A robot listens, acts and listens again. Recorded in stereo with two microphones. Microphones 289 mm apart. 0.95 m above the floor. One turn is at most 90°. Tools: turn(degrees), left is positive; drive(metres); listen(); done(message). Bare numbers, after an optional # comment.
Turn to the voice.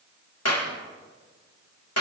listen()
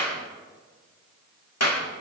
listen()
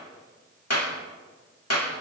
done("I can't make out anyone speaking to turn to.")